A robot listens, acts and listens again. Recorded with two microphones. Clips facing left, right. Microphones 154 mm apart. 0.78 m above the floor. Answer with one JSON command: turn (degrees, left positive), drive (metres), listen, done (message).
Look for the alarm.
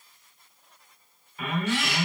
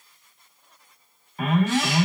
{"turn": -40}
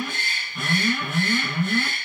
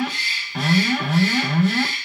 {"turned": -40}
{"turn": -100}
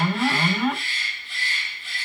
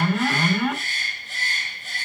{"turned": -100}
{"done": "Facing the alarm, 2 to 4 m away."}